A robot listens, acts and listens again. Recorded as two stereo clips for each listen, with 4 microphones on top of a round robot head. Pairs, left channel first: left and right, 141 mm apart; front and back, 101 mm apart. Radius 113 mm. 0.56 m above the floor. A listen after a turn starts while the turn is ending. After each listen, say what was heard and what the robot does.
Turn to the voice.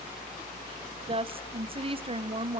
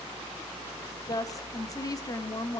The woman speaking: 50° right. Turn 50° right.
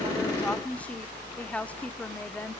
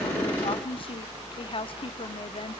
Keep listening.
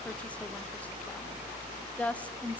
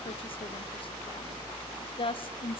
The woman speaking is now 10° left. Turn 10° left.
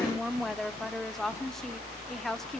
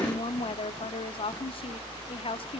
Found it: a woman speaking, straight ahead, 1 to 2 m away.